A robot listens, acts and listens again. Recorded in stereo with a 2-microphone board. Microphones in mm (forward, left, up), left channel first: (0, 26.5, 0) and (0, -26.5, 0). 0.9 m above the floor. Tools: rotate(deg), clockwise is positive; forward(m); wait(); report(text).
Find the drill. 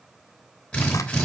rotate(-30)
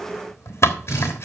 rotate(-135)
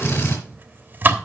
rotate(-45)
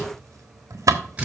rotate(25)
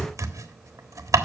report("Found it: a drill, straight ahead, over 4 m away.")